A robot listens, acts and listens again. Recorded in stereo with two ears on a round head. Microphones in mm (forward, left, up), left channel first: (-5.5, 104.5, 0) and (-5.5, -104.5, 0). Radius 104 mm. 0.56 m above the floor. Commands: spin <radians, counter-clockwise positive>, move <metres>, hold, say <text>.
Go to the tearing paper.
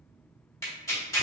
spin 0.52
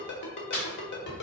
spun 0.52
spin 2.36
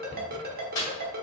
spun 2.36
spin 0.35
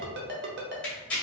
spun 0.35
move 1.0
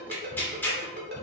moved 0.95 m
spin 0.17
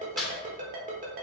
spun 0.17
move 1.0
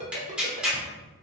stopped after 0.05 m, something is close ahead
say I am next to the tearing paper.